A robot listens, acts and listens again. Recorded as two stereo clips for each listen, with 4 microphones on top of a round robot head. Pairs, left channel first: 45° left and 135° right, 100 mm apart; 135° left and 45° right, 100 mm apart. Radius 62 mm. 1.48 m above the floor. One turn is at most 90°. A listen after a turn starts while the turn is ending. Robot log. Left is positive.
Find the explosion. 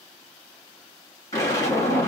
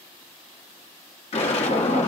note: The explosion: 110° left.
cmd yaw +90
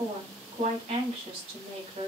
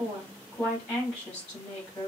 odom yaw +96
note: Nothing new. It was at 10° left.
cmd yaw +10
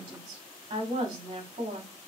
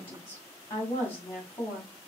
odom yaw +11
end: I heard an explosion from this way, but can't make it out now.